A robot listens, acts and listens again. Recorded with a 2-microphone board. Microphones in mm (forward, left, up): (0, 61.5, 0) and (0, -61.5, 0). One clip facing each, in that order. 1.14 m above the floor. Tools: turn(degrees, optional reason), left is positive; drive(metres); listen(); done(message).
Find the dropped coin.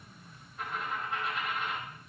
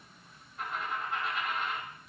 turn(degrees=30)
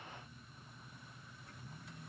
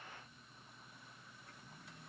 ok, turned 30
listen()
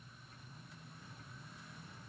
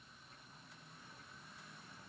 done("I heard a dropped coin, but can't make it out now. It was about 30° right or 150° left.")